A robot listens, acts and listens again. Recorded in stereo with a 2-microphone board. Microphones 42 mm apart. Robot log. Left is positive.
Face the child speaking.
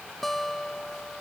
cmd idle
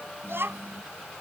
note: The child speaking: about 70° right or 110° right.
cmd yaw -70
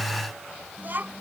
note: So it is at 50° right.
cmd yaw -50
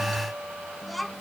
end: Facing the child speaking.